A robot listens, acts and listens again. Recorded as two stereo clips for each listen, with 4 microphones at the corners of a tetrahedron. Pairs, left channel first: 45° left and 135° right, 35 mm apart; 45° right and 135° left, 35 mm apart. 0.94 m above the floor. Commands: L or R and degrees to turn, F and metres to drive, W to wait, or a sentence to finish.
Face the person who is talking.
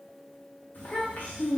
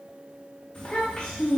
L20
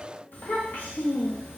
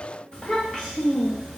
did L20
L30
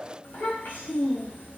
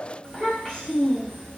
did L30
L35
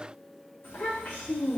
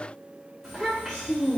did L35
L50
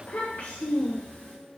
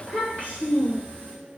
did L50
Facing the child speaking.